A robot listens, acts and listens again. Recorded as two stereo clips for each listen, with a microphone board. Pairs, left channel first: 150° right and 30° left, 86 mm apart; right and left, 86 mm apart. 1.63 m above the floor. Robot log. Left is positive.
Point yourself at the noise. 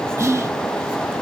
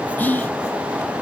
note: The whispering: 20° right.
cmd yaw -20
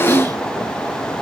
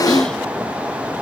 cmd idle
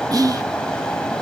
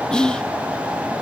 note: The whispering is now 10° right.
cmd yaw -10
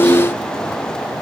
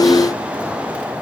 cmd idle
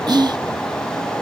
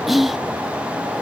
end: Found it: whispering, straight ahead.